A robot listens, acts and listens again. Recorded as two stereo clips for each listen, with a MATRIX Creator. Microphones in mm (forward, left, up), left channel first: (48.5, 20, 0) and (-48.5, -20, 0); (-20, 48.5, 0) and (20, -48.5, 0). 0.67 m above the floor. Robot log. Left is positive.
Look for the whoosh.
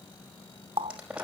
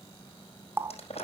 cmd idle
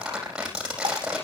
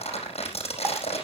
cmd idle
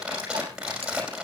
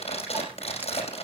end: I can't make out a whoosh, only a running tap and crumpling.